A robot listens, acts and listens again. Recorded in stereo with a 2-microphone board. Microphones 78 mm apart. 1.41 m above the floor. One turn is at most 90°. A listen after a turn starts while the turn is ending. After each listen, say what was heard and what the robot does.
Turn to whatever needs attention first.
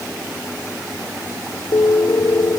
Keep listening.
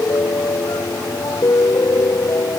Keep listening.
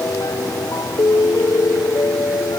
I can't make out anything urgent, only a piano.